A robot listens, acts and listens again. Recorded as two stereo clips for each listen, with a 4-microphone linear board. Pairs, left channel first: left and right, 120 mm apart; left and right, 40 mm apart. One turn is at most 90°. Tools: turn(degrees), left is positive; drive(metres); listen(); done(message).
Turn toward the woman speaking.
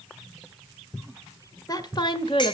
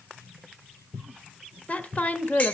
turn(degrees=45)
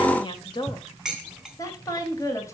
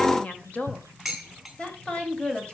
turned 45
turn(degrees=25)
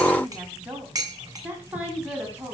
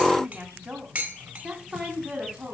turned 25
turn(degrees=-15)
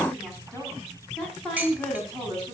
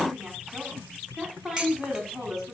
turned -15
done("Found it: a woman speaking, straight ahead, 2 to 4 m away.")